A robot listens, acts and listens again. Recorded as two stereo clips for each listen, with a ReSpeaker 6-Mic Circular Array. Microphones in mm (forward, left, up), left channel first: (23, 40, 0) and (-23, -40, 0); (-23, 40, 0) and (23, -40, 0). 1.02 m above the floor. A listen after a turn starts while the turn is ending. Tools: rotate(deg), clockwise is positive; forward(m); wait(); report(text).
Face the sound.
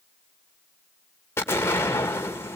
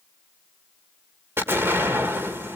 report("Found it: an explosion, straight ahead.")